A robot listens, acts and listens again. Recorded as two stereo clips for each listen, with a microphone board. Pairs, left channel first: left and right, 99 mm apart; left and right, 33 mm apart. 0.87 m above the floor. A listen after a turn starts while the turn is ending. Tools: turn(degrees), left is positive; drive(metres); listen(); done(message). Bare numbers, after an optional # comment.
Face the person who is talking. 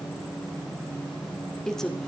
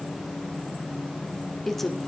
turn(30)
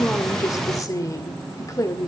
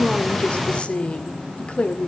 # So it is at 145° left.
turn(145)
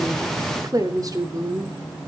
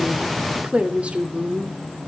# The woman speaking is now 40° right.
turn(-40)
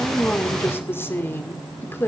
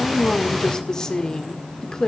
# The woman speaking is now 25° left.
turn(25)
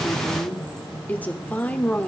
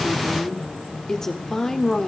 # The woman speaking is now 20° left.
turn(20)
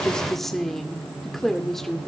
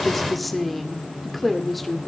done("Found it: a woman speaking, straight ahead, 2 to 4 m away.")